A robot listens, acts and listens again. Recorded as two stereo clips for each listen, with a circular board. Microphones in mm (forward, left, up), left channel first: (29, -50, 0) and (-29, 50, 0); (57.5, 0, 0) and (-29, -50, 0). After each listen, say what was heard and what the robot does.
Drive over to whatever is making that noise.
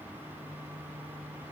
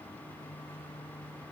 Keep listening.
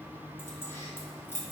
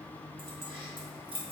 The keys jangling: 130° right. Turn 130° right.
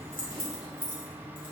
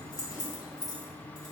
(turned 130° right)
The keys jangling is now 20° right. Turn 20° right.
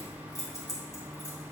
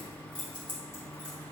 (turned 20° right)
Drive 1.0 m forward.
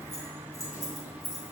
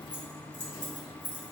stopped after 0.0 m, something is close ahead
Blocked. The keys jangling is further on, straight ahead.